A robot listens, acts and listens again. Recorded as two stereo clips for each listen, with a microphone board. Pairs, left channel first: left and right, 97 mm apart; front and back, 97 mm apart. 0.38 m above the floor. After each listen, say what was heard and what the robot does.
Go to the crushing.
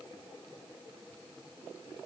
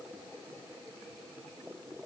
Keep listening.
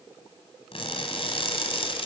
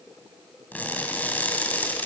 The crushing: 70° left. Turn 70° left.
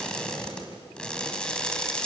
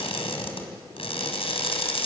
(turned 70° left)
The crushing is now 10° left. Turn 10° left.
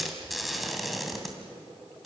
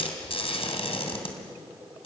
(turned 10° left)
Drive 1.0 m forward.
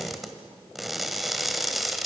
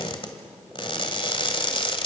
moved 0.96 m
Drive 1.0 m forward.
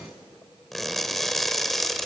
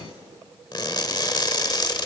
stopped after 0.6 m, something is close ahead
I am next to the crushing.